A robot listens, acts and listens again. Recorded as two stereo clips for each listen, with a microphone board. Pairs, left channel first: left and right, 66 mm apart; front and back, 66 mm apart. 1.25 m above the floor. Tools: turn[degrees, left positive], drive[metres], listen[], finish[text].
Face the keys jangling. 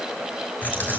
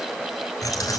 Thought: The keys jangling: 30° left.
Action: turn[30]
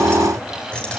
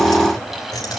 Thought: The keys jangling is now 20° left.
Action: turn[20]
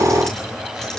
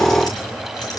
Thought: The keys jangling is now 10° left.
Action: turn[10]
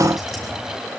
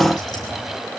Action: finish[Found it: keys jangling, straight ahead.]